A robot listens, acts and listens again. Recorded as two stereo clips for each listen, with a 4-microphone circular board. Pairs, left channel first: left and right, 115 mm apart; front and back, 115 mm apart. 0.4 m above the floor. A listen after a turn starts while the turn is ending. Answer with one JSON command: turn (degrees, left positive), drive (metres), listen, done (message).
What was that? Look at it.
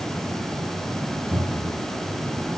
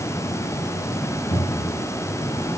{"turn": -15}
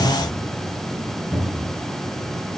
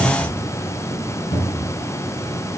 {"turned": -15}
{"done": "Facing the cupboard door, over 4 m away."}